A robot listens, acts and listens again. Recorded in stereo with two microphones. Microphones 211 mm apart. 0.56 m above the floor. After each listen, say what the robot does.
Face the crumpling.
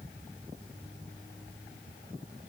Keep listening.
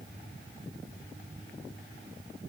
Keep listening.
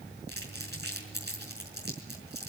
Turn 50° right.
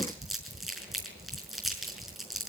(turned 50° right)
Facing the crumpling, over 4 m away.